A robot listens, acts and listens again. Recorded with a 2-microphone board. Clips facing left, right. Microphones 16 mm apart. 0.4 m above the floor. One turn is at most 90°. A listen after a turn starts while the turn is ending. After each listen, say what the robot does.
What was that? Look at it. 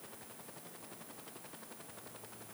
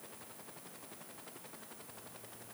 Keep listening.
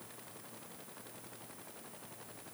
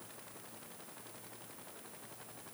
Keep listening.
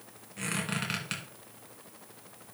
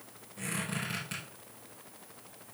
Turn 45° left.
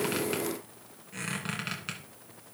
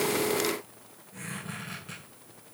Turn 90° left.
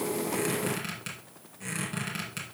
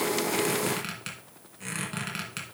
Turn 15° right.
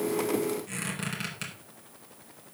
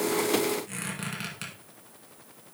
Facing the squeak, 2 to 4 m away.